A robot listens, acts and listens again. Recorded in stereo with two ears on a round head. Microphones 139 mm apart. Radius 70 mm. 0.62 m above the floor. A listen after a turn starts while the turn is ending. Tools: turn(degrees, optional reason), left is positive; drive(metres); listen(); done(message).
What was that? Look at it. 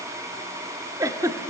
turn(degrees=-20, reason="The giggle: about 20° right or 160° right.")
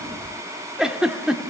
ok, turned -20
done("Facing the giggle.")